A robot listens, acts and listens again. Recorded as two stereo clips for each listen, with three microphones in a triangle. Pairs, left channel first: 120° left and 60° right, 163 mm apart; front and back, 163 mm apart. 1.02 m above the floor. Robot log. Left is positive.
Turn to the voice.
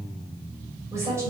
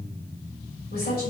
note: The woman speaking: 15° left.
cmd yaw +15
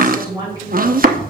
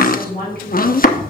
end: Facing the woman speaking, over 4 m away.